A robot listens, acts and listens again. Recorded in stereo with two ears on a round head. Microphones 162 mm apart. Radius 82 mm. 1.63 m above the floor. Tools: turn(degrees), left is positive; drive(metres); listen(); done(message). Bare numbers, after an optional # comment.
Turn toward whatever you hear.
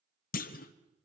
# The clunk: about 45° left or 135° left.
turn(45)
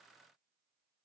listen()
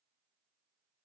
done("I heard a clunk, but can't make it out now. It was about straight ahead or 90° left.")